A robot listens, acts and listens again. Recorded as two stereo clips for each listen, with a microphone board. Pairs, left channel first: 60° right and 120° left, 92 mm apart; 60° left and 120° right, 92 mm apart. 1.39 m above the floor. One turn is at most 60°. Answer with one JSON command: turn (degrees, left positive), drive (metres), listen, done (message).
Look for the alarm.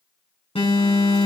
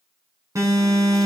{"turn": -60}
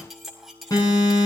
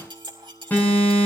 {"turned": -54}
{"turn": -10}
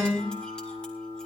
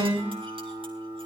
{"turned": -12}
{"done": "Found it: an alarm, straight ahead, over 4 m away."}